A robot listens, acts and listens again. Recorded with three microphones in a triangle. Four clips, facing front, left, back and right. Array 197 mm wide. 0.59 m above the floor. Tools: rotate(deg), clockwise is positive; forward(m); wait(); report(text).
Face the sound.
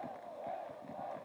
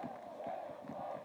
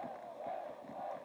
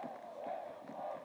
wait()
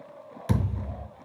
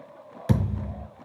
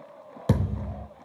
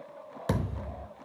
rotate(-180)
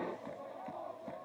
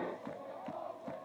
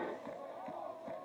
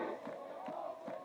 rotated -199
rotate(20)
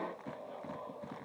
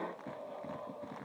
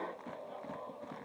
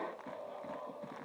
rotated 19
report("I heard a thud from this way, but can't make it out now.")